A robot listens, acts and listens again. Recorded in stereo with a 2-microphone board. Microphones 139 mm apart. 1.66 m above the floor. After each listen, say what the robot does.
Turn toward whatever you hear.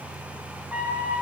Turn 30° right.
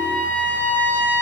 Turn 15° left.
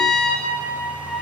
Found it: a trumpet, straight ahead.